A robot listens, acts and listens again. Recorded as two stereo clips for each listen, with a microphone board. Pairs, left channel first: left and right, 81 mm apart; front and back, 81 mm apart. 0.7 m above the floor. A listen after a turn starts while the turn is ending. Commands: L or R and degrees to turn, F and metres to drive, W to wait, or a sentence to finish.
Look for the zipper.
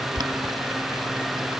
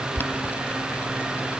W
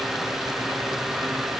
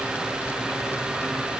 W
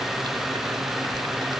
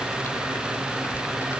I can't make out a zipper.